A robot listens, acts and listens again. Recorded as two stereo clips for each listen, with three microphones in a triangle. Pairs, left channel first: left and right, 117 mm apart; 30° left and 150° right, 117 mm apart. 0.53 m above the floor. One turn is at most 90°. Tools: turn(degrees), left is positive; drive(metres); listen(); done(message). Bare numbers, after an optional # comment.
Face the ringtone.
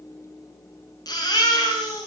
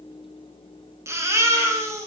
listen()
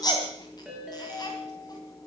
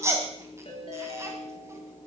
# The ringtone: 10° right.
turn(-10)
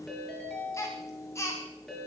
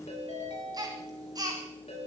done("Found it: a ringtone, straight ahead.")